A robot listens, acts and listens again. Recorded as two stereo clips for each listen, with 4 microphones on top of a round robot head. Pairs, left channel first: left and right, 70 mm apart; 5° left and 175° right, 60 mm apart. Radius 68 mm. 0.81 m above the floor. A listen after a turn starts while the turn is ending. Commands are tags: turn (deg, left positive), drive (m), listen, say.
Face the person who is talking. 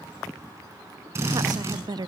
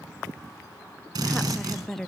<turn deg="-80"/>
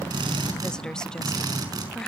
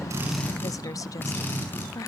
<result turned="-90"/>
<turn deg="10"/>
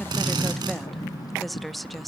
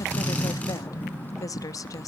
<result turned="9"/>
<say>Found it: a woman speaking, straight ahead.</say>